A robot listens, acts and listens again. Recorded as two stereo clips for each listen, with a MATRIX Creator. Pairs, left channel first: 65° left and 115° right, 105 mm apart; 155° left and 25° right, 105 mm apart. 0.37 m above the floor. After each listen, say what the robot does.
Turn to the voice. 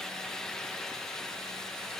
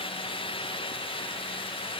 Keep listening.
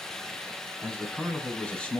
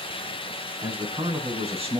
Turn 15° right.
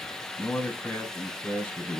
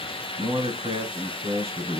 Facing the man speaking.